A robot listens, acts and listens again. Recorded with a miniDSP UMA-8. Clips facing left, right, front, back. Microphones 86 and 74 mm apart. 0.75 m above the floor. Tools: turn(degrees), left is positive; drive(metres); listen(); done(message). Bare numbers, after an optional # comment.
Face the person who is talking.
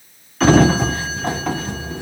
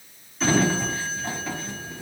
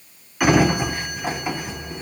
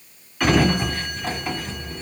listen()
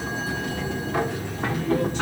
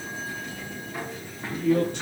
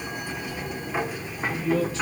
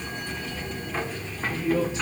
# The man speaking: 110° right.
turn(-110)
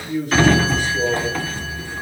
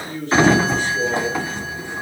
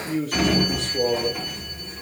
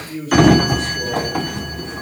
# The man speaking is now 10° left.
turn(10)
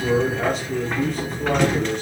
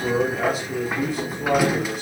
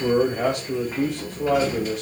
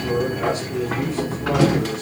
done("Facing the man speaking, 2 to 4 m away.")